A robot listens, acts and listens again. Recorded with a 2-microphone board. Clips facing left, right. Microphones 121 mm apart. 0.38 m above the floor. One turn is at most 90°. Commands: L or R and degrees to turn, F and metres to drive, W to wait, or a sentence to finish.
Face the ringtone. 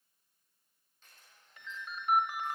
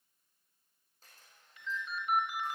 L50
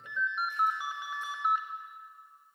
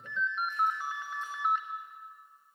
L10
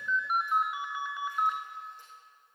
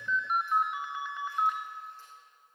Found it: a ringtone, straight ahead.